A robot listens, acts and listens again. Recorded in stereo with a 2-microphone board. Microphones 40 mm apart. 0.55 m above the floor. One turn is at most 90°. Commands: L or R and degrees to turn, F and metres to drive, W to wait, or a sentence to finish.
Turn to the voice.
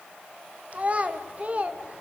R35
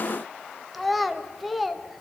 Facing the child speaking, 1 to 2 m away.